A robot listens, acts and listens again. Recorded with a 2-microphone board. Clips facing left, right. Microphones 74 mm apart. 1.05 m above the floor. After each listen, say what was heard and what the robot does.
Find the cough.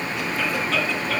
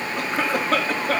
The cough: about 45° right or 135° right. Turn 45° right.
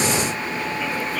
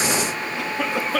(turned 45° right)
So it is at 90° right. Turn 90° right.
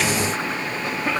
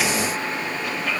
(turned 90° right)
Keep listening.
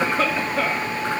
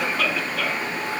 The cough is now 30° left. Turn 30° left.
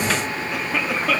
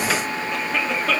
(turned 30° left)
Found it: a cough, straight ahead.